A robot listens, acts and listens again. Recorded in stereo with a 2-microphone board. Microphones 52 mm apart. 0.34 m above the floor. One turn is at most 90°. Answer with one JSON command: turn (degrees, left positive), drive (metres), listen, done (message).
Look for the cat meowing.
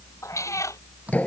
{"turn": 90}
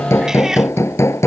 {"turn": -10}
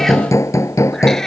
{"turn": 10}
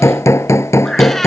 {"listen": true}
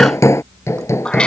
{"turn": 20}
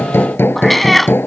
{"done": "Found it: a cat meowing, straight ahead."}